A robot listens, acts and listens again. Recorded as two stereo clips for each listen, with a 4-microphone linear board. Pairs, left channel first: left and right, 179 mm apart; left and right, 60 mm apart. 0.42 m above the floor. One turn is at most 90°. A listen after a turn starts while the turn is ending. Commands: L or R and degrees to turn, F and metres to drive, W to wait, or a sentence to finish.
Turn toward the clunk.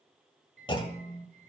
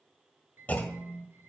L30
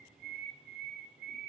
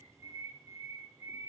W
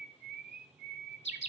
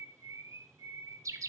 I heard a clunk, but can't make it out now. It was about straight ahead or 120° left.